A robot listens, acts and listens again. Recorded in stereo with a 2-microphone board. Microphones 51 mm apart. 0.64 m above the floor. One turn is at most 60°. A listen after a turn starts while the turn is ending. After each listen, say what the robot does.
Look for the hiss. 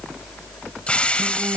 Turn 20° left.
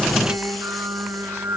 Keep listening.
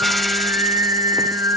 Keep listening.
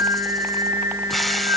I heard a hiss, but can't make it out now. It was about straight ahead or 140° left.